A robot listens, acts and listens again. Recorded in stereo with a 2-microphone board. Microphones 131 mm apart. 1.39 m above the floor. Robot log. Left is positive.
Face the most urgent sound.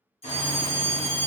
note: The fire alarm: about 50° left or 130° left.
cmd yaw +50
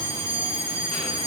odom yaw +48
note: So it is at 75° left.
cmd yaw +75
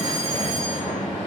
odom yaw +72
cmd idle
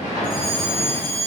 end: Facing the fire alarm.